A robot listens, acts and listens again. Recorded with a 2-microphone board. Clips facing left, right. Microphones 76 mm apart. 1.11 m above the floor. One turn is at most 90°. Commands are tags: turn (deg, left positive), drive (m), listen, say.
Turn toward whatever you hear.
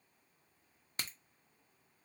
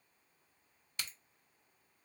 <turn deg="40"/>
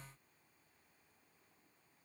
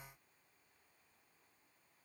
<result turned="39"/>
<listen/>
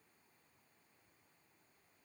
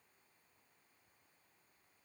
<say>I heard a crack, but can't make it out now. It was about 5° left or 100° left.</say>